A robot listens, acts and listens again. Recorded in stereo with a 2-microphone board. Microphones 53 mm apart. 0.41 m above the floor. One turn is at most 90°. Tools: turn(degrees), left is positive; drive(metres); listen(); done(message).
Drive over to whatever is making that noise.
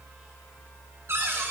turn(degrees=-60)
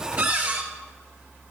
turn(degrees=-50)
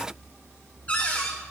turn(degrees=35)
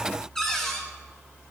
turn(degrees=10)
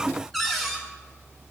drive(metres=1.0)
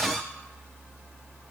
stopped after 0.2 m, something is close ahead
done("Something is in my way. I am facing the cupboard door but have not reached it.")